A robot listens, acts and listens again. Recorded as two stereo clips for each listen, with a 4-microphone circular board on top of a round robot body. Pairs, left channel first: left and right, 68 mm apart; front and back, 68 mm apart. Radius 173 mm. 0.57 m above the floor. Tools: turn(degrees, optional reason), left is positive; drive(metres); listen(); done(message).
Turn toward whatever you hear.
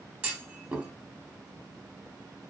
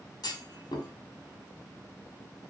turn(degrees=-25, reason="The clunk: 25° right.")
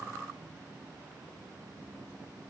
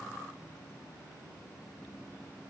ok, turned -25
done("I heard a clunk from this way, but can't make it out now.")